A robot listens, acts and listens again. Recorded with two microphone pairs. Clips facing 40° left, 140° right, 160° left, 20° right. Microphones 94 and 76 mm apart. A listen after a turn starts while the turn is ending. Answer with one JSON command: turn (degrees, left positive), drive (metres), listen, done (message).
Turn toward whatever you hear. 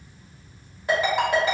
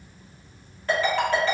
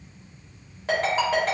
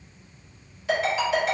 {"turn": 115}
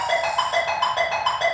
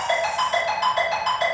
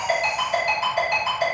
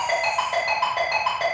{"done": "Facing the ringtone."}